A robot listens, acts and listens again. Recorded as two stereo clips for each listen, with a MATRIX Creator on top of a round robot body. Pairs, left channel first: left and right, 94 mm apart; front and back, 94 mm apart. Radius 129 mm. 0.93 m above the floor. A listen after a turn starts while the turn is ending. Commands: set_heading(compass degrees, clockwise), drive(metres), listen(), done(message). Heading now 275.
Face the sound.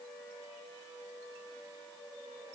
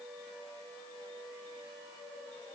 listen()
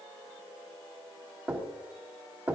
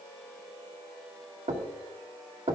set_heading(80)
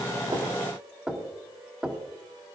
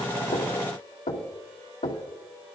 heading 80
set_heading(90)
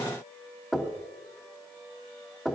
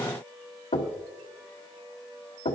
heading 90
done("Found it: knocking, straight ahead, 2 to 4 m away.")